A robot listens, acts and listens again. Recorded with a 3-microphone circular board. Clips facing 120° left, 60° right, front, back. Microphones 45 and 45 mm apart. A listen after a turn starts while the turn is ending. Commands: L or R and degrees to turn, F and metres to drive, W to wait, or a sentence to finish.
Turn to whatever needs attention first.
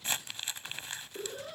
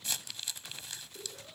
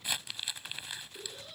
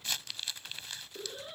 L120
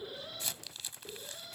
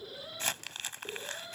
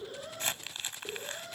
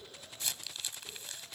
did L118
Facing the alarm.